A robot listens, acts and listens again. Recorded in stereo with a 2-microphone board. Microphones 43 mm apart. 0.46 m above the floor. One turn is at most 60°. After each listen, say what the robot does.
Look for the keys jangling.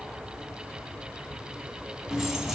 Turn 30° right.
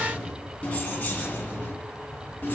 Turn 35° left.
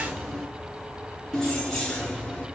Turn 10° left.
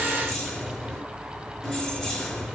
Facing the keys jangling.